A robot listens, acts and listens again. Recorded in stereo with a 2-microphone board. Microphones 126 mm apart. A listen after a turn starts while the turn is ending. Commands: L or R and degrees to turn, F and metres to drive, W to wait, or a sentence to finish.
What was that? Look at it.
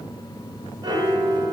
R40
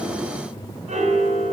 R100
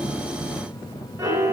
R25
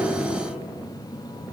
W
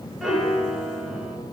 Facing the piano, 1 to 2 m away.